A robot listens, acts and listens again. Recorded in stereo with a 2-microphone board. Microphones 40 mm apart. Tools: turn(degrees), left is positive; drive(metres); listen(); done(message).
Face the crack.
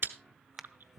turn(degrees=-30)
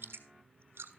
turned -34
listen()
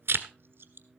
done("I heard a crack, but can't make it out now. It was about 25° left or 140° right.")